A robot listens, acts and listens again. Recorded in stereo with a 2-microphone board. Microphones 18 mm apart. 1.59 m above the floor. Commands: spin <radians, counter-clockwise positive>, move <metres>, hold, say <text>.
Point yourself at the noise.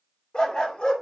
spin 0.87
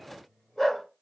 spin 0.17
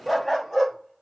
say Found it: a dog barking, straight ahead, 2 to 4 m away.